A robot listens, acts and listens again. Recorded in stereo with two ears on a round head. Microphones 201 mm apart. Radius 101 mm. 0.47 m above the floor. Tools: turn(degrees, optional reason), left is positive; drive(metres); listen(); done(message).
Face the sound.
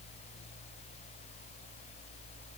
listen()
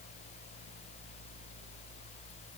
listen()
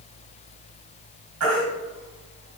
turn(degrees=-70, reason="The baby crying: about 70° right or 110° right.")
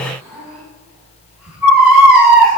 done("Found it: a baby crying, straight ahead.")